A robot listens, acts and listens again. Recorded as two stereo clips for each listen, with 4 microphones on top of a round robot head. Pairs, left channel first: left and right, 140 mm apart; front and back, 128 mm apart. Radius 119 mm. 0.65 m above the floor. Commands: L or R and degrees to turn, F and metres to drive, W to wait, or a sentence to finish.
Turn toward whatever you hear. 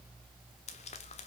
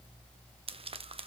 L135
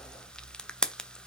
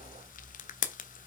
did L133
Found it: frying, straight ahead.